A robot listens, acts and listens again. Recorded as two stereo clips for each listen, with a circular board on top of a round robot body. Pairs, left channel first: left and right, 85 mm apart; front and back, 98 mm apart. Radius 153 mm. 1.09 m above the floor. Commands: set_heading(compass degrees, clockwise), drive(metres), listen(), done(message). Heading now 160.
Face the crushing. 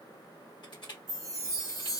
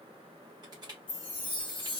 set_heading(30)
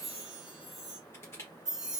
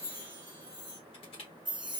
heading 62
set_heading(32)
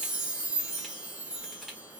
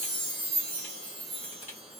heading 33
listen()
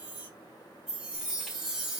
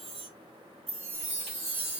listen()
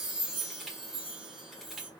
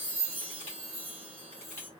done("Facing where the crushing came from. I can't hear it now.")